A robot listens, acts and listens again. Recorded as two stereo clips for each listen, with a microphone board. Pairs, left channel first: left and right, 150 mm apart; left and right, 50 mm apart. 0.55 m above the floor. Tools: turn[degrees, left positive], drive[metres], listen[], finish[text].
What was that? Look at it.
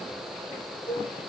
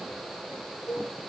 Action: turn[90]
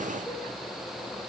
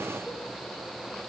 Action: listen[]
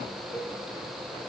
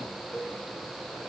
Thought: The cowbell is now 10° left.
Action: turn[10]
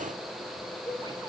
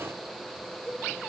Action: finish[Found it: a cowbell, straight ahead, over 4 m away.]